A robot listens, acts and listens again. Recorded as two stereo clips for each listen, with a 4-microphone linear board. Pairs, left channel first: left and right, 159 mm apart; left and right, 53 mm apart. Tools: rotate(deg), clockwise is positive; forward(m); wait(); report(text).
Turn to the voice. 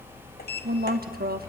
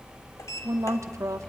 rotate(70)
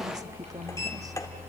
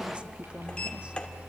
wait()
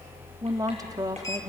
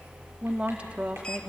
rotate(25)
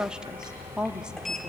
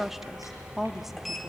report("Found it: a woman speaking, straight ahead.")